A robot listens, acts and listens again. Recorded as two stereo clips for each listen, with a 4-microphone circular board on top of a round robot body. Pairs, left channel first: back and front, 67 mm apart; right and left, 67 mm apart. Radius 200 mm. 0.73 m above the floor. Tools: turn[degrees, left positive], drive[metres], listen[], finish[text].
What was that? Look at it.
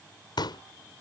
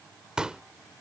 Thought: The pop: 170° left.
Action: turn[170]
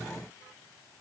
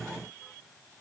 Action: finish[Facing where the pop came from. I can't hear it now.]